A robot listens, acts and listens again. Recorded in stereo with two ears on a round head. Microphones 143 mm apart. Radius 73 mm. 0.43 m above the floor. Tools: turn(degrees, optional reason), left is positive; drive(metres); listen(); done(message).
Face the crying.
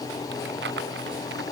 listen()
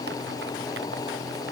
listen()
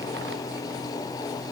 done("I can't make out crying.")